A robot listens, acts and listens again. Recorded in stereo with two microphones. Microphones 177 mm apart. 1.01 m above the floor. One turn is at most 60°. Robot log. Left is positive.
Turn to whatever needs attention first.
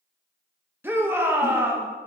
cmd yaw -30
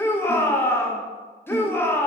note: So it is at 15° left.
cmd yaw +15
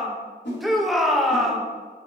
end: Facing the shout, 1 to 2 m away.